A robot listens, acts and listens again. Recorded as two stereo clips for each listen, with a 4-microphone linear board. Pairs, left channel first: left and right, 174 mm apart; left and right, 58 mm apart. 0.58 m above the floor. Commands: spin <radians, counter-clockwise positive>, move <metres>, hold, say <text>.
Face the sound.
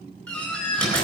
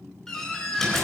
spin 0.52
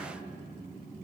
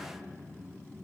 hold
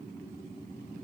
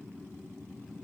say I heard a door slam, but can't make it out now. It was about 20° right or 140° left.